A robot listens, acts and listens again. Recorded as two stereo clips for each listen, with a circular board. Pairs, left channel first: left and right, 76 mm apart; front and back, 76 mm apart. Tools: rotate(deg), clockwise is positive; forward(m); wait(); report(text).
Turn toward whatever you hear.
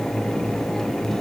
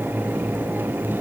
wait()
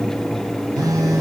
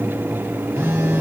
rotate(120)
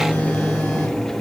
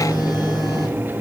rotate(-25)
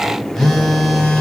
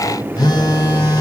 report("Facing the phone buzzing, 1 to 2 m away.")